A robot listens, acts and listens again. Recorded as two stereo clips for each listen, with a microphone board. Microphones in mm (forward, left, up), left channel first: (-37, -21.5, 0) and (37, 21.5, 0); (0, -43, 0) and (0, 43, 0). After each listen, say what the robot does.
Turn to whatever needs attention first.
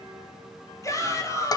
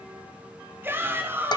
Turn 155° left.
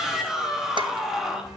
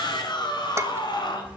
Turn 55° right.
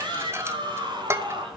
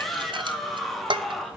Facing the shout, 2 to 4 m away.